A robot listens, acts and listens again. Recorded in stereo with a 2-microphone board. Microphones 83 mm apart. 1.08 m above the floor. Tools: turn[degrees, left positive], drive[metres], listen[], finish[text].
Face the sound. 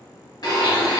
Thought: The blender: about 55° left or 125° left.
Action: turn[55]
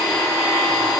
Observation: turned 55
Action: finish[Facing the blender, under 1 m away.]